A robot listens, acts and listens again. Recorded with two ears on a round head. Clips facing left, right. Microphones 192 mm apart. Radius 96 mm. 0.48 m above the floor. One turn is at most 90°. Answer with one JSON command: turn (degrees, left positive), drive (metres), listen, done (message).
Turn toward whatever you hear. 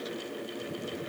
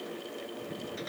{"listen": true}
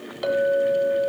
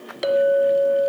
{"turn": -35}
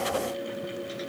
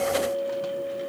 {"turn": -90}
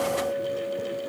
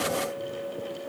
{"turn": -20}
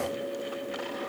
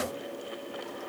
{"listen": true}
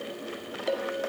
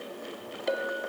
{"done": "Found it: a clink, straight ahead, 2 to 4 m away."}